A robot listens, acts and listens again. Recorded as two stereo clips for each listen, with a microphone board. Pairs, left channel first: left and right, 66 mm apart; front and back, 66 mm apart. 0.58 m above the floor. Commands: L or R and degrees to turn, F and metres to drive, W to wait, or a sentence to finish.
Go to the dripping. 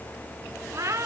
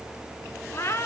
W
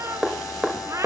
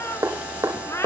R175
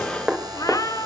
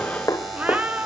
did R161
R15
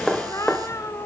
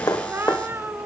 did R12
F1.0
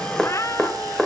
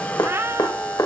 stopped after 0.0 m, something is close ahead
Blocked. The dripping is further on, straight ahead.